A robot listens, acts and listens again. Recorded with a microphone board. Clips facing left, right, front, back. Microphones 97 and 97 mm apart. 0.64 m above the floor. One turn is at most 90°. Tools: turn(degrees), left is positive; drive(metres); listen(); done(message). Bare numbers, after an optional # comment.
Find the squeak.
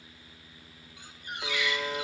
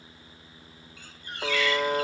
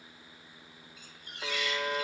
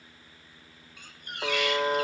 # The squeak: 160° left.
turn(90)
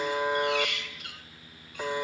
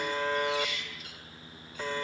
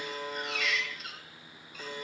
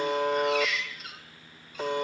# The squeak is now 90° left.
turn(90)
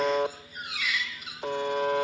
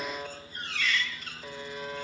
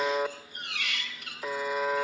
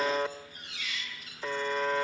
# The squeak is now 10° left.
turn(10)
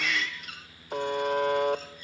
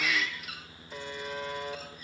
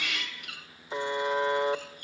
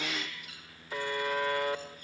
done("Found it: a squeak, straight ahead.")